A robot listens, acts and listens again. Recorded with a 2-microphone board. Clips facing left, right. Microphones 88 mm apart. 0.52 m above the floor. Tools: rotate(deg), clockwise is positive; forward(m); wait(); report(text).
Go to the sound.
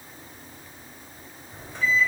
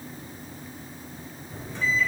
rotate(-55)
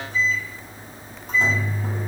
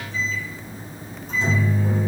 rotate(-65)
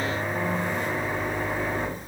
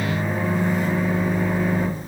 rotate(10)
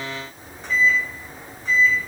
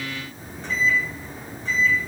forward(1.0)
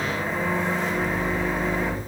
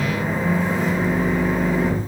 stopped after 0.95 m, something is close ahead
report("Arrived at the microwave, straight ahead.")